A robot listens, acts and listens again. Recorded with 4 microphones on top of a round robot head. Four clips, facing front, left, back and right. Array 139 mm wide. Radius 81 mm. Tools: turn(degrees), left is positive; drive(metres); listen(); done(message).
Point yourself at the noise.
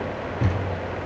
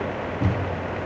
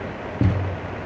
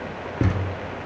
turn(degrees=-130)
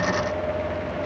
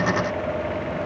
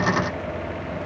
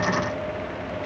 done("Facing where the thud came from. I can't hear it now.")